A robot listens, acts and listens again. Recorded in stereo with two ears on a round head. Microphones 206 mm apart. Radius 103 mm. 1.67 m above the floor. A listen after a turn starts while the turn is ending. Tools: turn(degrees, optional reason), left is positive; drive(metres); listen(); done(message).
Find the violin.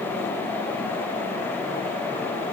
listen()
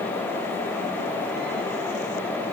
listen()
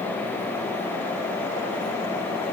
done("I can't make out a violin.")